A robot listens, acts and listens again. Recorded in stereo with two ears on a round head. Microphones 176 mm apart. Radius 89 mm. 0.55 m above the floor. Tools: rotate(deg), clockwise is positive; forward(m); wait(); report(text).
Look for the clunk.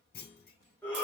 rotate(-45)
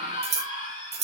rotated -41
wait()
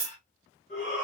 report("I heard a clunk, but can't make it out now. It was about 5° left or 95° left.")